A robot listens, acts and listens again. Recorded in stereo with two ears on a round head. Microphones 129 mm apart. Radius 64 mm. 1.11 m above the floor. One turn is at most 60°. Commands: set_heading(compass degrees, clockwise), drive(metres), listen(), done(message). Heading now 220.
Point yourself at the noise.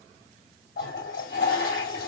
set_heading(160)
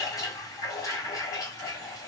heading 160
set_heading(135)
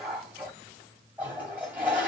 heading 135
set_heading(145)
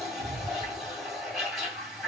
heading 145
done("Facing the toilet flushing, 2 to 4 m away.")